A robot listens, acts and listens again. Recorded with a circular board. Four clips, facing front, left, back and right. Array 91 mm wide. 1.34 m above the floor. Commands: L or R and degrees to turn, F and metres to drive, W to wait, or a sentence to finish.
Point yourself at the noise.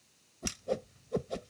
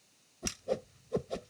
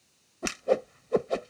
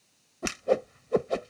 R135
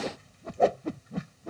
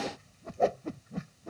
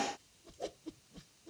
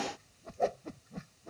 L15
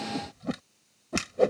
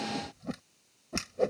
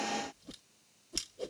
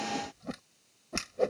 Found it: a whoosh, straight ahead.